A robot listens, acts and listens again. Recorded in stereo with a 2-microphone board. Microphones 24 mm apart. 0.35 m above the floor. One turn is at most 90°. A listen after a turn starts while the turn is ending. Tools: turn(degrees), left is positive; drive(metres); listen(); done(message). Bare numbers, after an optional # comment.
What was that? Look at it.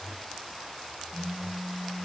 # The phone buzzing: about 65° left or 115° left.
turn(65)
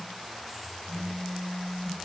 done("Facing the phone buzzing.")